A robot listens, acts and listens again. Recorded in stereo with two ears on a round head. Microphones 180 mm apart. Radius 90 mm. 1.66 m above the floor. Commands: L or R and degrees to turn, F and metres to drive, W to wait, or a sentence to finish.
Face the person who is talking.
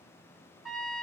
W
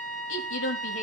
L70
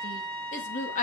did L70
L40
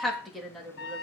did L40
Found it: a woman speaking, straight ahead, 2 to 4 m away.